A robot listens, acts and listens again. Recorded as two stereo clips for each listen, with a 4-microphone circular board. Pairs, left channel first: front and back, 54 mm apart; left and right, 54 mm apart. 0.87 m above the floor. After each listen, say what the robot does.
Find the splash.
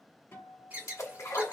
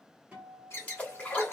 Turn 25° left.
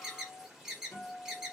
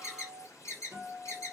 Facing where the splash came from. I can't hear it now.